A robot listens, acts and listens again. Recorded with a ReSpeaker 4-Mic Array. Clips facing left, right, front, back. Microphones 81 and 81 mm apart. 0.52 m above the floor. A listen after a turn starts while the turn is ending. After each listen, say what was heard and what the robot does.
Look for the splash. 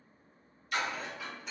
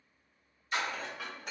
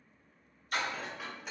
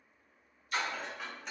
The splash: 30° right. Turn 30° right.
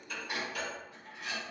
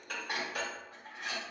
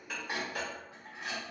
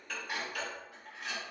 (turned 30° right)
Facing where the splash came from. I can't hear it now.